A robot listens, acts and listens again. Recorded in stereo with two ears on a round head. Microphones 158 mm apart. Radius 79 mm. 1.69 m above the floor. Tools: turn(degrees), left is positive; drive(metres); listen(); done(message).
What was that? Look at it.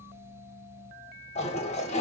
turn(degrees=40)
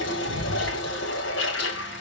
turn(degrees=105)
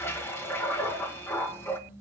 turn(degrees=15)
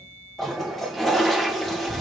done("Found it: a toilet flushing, straight ahead.")